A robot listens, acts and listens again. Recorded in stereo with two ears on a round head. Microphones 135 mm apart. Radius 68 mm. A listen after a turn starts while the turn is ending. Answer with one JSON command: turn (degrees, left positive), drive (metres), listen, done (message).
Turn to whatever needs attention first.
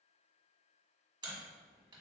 {"listen": true}
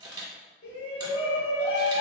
{"turn": 90}
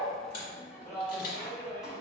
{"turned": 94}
{"done": "Facing the shout."}